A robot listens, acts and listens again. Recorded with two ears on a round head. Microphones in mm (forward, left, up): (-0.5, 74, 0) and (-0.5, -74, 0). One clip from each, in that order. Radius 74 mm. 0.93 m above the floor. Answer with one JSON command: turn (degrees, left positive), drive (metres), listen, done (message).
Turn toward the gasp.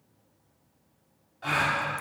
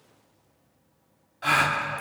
{"turn": -40}
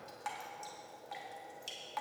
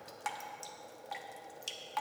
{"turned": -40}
{"listen": true}
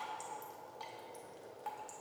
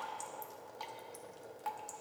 {"done": "I heard a gasp, but can't make it out now. It was about straight ahead or 100° right."}